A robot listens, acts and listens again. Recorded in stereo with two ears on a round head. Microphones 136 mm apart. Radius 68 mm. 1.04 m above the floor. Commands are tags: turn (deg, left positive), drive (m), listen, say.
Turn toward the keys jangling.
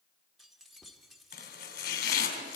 <turn deg="30"/>
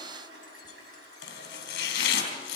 <listen/>
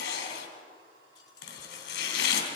<listen/>
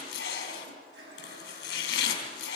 <say>I heard keys jangling, but can't make it out now. It was about 30° right or 150° left.</say>